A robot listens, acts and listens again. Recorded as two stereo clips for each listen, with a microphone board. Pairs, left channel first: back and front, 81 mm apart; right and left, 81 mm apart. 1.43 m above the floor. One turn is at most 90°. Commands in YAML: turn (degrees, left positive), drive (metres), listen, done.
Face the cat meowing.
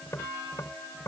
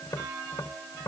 listen: true
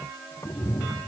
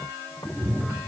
turn: -90
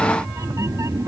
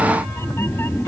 turn: -35
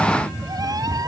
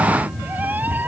turn: 30
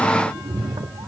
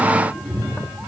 turn: 10
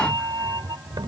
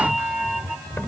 done: "Found it: a cat meowing, straight ahead."